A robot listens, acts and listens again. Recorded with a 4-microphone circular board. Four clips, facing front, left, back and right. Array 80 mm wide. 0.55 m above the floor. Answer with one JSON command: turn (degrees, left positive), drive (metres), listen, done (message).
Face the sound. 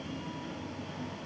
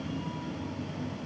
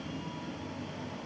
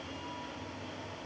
{"listen": true}
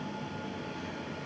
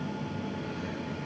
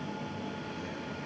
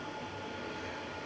{"listen": true}
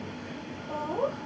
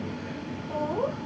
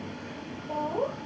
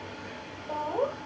{"turn": -85}
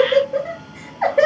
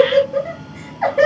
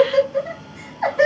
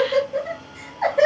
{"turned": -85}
{"turn": 15}
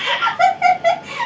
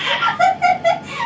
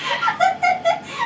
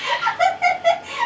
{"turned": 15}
{"done": "Found it: laughter, straight ahead."}